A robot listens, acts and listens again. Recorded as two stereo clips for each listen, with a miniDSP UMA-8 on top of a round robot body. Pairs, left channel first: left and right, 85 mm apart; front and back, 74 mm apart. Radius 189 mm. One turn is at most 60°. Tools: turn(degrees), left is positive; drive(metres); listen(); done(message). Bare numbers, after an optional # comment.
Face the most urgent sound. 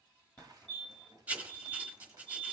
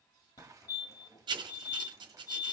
# The fire alarm: 15° left.
turn(15)
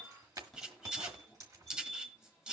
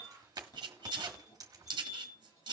# The fire alarm is now 10° left.
turn(10)
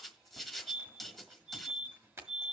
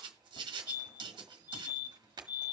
done("Facing the fire alarm, 2 to 4 m away.")